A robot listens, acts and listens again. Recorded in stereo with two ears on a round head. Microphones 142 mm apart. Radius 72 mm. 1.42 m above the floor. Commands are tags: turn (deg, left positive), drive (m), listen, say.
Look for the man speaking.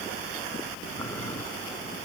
<listen/>
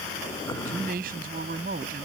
<turn deg="-55"/>
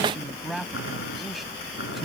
<say>Found it: a man speaking, straight ahead.</say>